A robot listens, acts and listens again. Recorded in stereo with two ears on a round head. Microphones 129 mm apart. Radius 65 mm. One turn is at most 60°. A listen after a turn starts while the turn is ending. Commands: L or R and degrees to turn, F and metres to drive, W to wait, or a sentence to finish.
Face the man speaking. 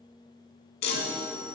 W
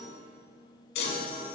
W
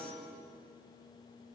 I can't make out a man speaking, only a chime.